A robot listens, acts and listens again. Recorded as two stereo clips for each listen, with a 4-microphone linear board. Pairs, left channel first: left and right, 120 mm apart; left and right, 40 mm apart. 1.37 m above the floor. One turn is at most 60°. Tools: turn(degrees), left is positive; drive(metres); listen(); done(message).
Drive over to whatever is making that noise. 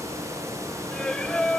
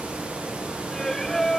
turn(degrees=30)
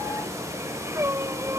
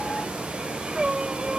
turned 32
turn(degrees=-25)
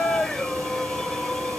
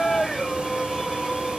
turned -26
drive(metres=1.0)
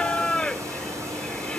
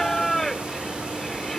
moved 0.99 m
turn(degrees=10)
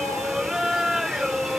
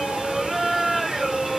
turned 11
drive(metres=1.0)
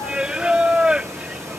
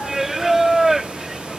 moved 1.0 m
turn(degrees=-10)
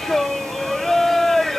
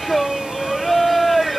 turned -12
drive(metres=1.0)
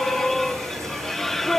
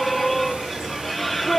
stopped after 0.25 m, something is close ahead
done("I am next to the singing.")